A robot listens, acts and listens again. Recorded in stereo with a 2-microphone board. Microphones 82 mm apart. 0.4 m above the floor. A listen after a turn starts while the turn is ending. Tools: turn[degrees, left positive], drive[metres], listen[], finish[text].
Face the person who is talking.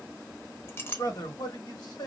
Thought: The man speaking: about 55° left or 125° left.
Action: turn[55]
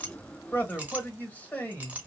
Thought: So it is at 25° left.
Action: turn[25]
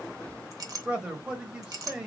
Thought: The man speaking is now 15° right.
Action: turn[-15]
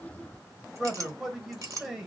Action: finish[Found it: a man speaking, straight ahead.]